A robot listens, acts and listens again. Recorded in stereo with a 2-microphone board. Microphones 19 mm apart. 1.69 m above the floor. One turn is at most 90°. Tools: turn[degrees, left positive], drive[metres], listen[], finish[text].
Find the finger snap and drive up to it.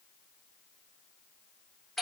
Action: listen[]
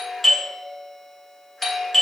Action: listen[]
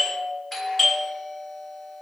Action: finish[I can't make out a finger snap to turn to.]